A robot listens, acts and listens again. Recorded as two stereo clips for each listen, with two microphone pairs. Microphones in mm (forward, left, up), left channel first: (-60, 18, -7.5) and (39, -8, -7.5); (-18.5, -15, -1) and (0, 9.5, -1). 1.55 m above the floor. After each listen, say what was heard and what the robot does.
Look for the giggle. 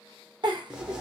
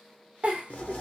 The giggle: 15° left. Turn 15° left.
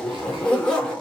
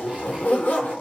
Keep listening.
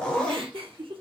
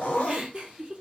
Found it: a giggle, straight ahead, under 1 m away.